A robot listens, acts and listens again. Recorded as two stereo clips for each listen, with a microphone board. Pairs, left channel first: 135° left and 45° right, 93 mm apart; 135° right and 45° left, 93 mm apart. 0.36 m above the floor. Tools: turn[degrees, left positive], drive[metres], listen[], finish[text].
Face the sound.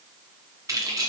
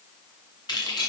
Thought: The keys jangling: 95° right.
Action: turn[-95]
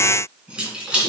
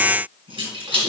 Thought: The keys jangling is now 35° left.
Action: turn[35]
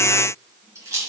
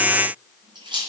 Thought: The keys jangling is now 15° left.
Action: turn[15]
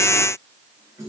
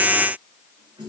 Thought: The keys jangling is now 10° left.
Action: turn[10]
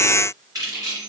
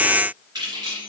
Action: finish[Found it: keys jangling, straight ahead, 2 to 4 m away.]